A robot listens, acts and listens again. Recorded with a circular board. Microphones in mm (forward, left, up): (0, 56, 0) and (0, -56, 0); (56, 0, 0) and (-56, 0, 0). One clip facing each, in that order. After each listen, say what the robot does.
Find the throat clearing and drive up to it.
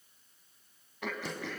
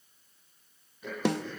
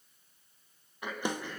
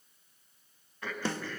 Turn 75° left.
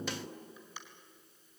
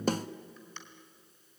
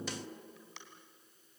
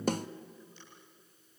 Turn 10° left.
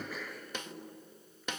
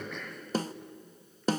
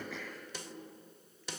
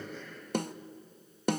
Drive 1.0 m forward.
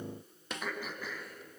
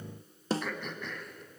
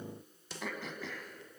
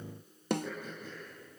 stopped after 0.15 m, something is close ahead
Blocked. The throat clearing is further on, straight ahead.